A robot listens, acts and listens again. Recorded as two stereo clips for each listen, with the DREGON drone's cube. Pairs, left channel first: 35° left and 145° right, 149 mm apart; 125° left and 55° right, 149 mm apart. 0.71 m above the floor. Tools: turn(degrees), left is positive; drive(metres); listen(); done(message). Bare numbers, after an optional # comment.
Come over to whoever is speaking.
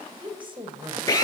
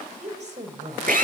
# The woman speaking: 90° right.
turn(-90)
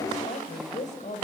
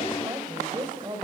drive(1.0)
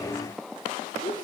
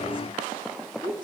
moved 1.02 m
drive(1.0)
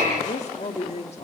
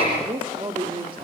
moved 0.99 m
drive(1.0)
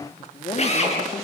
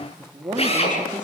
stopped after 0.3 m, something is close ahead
done("I am next to the woman speaking.")